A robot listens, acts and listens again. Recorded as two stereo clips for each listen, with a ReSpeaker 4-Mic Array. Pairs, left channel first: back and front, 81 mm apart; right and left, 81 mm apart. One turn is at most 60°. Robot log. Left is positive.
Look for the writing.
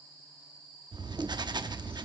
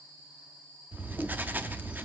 note: The writing: 25° left.
cmd yaw +25
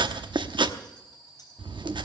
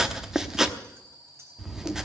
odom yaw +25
end: Facing the writing, 1 to 2 m away.